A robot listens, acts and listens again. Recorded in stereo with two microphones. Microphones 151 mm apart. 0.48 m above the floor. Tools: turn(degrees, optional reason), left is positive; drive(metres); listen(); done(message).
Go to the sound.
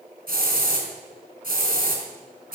turn(degrees=-90)
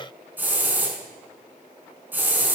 turn(degrees=-10, reason="So it is at 10° right.")
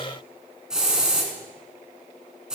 drive(metres=1.0)
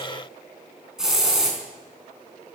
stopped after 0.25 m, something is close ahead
done("Something is in my way. I am facing the hiss but have not reached it.")